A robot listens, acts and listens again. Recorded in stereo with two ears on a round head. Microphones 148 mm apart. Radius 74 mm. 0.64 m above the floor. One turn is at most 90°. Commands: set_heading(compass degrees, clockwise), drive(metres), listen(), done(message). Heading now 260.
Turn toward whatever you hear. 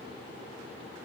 listen()
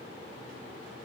listen()
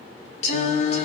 set_heading(220)
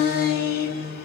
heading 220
set_heading(130)
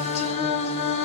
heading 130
set_heading(85)
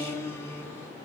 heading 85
set_heading(65)
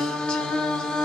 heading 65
done("Found it: singing, straight ahead.")